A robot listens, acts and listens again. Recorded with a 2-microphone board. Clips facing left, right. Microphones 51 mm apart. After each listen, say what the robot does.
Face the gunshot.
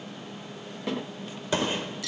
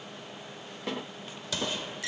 Turn 30° left.
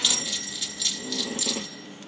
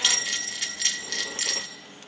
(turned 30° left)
Keep listening.
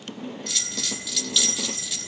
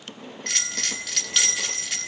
I heard a gunshot, but can't make it out now. It was about straight ahead or 120° left.